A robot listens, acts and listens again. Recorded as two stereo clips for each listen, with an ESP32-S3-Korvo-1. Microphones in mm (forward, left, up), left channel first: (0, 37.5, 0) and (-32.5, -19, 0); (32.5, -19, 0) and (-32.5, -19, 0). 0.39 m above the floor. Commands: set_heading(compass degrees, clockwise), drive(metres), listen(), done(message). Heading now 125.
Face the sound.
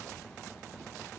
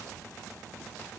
listen()
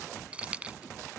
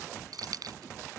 set_heading(315)
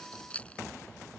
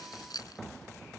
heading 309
set_heading(319)
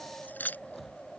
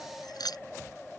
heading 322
done("Facing the keys jangling.")